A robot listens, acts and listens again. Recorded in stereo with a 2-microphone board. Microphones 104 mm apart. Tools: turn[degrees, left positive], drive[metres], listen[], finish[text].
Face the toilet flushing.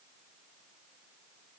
Action: listen[]
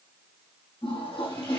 Thought: The toilet flushing: about 60° left or 120° left.
Action: turn[60]
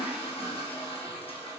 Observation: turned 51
Thought: So it is at 70° left.
Action: turn[70]
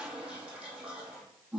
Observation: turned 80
Thought: The toilet flushing is now 10° right.
Action: turn[-10]
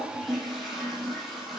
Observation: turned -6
Action: finish[Found it: a toilet flushing, straight ahead, over 4 m away.]